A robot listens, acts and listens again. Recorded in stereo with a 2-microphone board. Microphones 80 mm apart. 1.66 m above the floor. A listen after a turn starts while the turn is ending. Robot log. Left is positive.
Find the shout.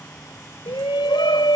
cmd yaw +90
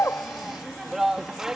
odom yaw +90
end: Found it: a shout, straight ahead.